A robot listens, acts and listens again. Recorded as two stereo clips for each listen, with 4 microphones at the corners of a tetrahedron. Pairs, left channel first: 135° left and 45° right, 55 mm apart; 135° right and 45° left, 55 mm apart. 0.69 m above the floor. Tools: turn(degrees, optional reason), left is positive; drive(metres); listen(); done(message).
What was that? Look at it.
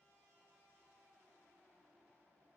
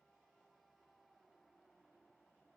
listen()
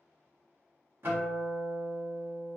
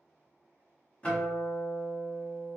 turn(degrees=-75, reason="The guitar: 75° right.")
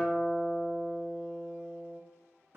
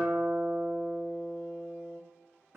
done("Found it: a guitar, straight ahead, 1 to 2 m away.")